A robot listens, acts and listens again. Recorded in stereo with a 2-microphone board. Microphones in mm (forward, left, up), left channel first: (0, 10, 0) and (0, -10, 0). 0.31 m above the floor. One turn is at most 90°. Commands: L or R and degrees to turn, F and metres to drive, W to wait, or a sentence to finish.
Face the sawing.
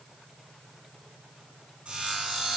R70
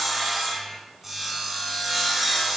R10
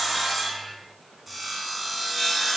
Facing the sawing, 2 to 4 m away.